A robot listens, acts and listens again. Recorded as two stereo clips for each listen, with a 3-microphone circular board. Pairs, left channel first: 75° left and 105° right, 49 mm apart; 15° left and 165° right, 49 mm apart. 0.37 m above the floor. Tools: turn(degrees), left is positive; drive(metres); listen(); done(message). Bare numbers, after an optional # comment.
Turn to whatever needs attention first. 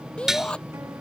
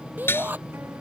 # The shout: 145° left.
turn(145)
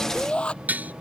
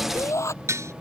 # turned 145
done("Facing the shout.")